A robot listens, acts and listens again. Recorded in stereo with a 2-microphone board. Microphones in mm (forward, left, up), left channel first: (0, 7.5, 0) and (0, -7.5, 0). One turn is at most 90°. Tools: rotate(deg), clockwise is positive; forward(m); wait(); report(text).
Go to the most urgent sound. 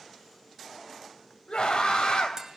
rotate(-75)
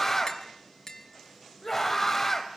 rotate(-20)
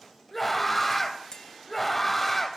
forward(1.0)
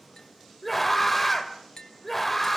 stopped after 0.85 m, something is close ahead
report("Blocked. The scream is further on, straight ahead.")